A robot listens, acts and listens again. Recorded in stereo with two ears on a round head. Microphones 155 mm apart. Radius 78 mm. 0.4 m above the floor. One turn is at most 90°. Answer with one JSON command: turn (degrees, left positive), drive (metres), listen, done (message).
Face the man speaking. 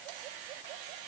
{"listen": true}
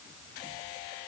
{"listen": true}
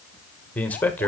{"turn": 30}
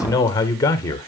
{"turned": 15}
{"turn": 20}
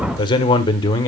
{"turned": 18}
{"turn": 25}
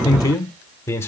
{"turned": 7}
{"turn": 30}
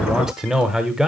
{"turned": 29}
{"turn": -30}
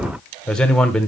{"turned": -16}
{"done": "Found it: a man speaking, straight ahead, 1 to 2 m away."}